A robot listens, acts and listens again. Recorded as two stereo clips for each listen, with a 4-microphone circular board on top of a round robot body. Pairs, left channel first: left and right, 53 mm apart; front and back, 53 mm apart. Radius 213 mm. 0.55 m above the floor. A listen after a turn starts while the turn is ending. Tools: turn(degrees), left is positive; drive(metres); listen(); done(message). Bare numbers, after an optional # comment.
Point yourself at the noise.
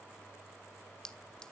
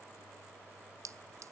# The clink: 170° left.
turn(170)
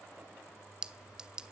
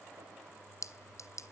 # The clink is now 15° right.
turn(-15)
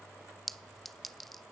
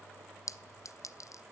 done("Facing the clink.")